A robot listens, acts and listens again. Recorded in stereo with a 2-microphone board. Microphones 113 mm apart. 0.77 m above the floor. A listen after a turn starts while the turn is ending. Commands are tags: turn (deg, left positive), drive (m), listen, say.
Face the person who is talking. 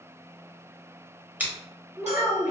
<turn deg="-30"/>
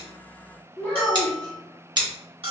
<turn deg="15"/>
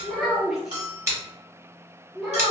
<say>Found it: a child speaking, straight ahead.</say>